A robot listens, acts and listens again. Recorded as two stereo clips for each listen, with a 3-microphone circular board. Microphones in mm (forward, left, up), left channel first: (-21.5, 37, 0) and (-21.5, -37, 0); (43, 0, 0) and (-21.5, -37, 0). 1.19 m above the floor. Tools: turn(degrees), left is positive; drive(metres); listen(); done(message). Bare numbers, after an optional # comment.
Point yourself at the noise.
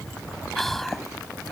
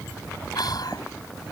done("Facing the whispering.")